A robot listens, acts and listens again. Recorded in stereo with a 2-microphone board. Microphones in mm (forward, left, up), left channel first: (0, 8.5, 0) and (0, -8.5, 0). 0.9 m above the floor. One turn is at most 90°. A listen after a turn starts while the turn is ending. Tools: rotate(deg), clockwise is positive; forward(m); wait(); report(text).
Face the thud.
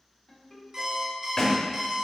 rotate(-55)
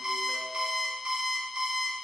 wait()
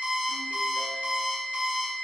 report("I heard a thud, but can't make it out now. It was about straight ahead or 70° left.")